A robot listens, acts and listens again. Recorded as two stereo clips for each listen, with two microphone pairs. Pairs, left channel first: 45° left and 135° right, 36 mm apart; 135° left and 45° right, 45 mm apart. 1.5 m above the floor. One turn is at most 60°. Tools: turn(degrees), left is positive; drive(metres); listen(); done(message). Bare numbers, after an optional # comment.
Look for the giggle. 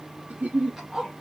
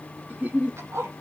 # The giggle: 95° right.
turn(-60)
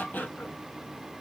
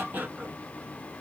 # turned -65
# Nothing new. It was at 30° right.
turn(-30)
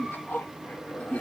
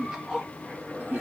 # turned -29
done("Facing the giggle, 1 to 2 m away.")